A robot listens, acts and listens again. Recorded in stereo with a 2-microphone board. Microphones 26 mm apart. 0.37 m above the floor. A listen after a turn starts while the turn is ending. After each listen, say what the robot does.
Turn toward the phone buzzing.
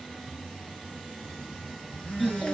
Turn 90° left.
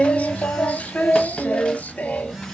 Facing the phone buzzing.